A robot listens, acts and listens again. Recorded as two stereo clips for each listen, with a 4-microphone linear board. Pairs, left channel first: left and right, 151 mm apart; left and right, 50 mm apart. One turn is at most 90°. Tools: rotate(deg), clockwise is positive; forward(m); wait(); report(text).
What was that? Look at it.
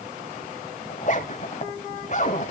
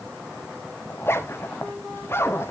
rotate(-55)
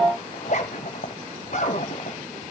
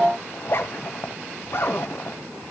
rotate(-60)
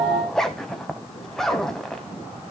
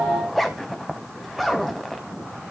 report("Facing the zipper.")